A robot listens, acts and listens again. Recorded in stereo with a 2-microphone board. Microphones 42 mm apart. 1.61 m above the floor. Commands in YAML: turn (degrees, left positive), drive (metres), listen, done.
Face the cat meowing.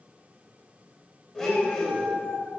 turn: 45
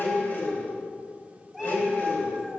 done: "Facing the cat meowing, over 4 m away."